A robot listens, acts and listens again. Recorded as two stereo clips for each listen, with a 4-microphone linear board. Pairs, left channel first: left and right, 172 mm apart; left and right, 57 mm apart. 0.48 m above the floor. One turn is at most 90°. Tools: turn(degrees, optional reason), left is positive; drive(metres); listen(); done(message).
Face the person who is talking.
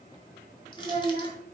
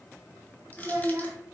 turn(degrees=-35, reason="The child speaking: about 35° right or 145° right.")
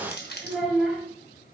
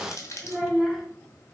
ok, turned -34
done("Found it: a child speaking, straight ahead.")